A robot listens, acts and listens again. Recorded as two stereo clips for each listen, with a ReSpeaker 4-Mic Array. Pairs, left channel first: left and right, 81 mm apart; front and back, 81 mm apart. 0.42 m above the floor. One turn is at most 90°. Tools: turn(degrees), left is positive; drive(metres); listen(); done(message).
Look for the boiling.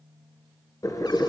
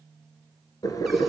turn(degrees=45)
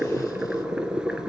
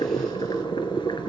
turn(degrees=-10)
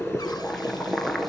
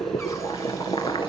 done("Found it: boiling, straight ahead, 2 to 4 m away.")